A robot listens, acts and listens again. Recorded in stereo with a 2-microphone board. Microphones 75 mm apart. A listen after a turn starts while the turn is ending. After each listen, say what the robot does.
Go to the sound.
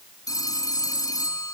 Turn 55° left.
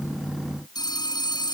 Turn 70° left.
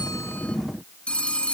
Turn 15° left.
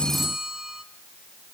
Drive 1.0 m forward.
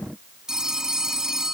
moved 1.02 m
Turn 10° right.
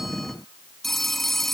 Drive 1.0 m forward.
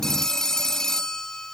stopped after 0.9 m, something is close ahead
Turn 10° left.
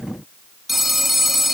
Arrived at the phone ringing, straight ahead.